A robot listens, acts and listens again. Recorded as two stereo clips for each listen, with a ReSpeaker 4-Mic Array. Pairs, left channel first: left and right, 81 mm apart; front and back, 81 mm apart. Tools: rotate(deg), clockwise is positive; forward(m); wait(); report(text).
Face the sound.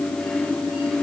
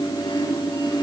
wait()
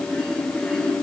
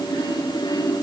wait()
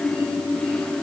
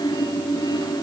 report("I can't make out anything to turn to.")